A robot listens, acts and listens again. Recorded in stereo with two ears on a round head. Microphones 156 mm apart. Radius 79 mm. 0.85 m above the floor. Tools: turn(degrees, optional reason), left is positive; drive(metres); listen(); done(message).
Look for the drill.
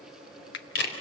listen()
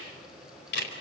listen()
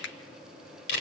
done("I can't make out a drill, only a finger snap and a camera shutter.")